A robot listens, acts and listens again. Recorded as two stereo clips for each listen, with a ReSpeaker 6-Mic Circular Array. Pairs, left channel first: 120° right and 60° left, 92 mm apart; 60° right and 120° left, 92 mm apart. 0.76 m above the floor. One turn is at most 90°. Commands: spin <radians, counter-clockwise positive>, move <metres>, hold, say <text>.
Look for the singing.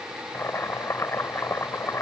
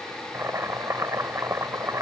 hold
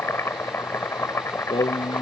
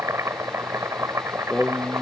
spin -1.57
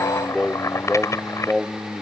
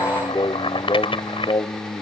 spin -0.52
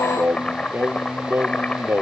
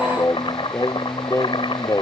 say Facing the singing.